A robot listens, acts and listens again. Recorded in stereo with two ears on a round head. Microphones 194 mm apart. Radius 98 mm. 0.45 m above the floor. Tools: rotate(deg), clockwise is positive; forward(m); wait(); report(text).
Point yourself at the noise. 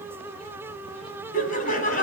rotate(-40)
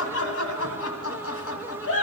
rotate(-100)
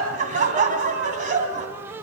rotate(35)
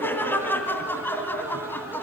rotate(-10)
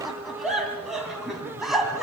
report("Facing the laughter, 2 to 4 m away.")